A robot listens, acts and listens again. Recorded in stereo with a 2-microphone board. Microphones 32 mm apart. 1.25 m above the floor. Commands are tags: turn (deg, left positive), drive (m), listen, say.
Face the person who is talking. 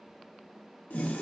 <listen/>
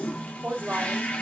<turn deg="-55"/>
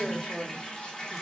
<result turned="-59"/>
<say>Facing the woman speaking, 2 to 4 m away.</say>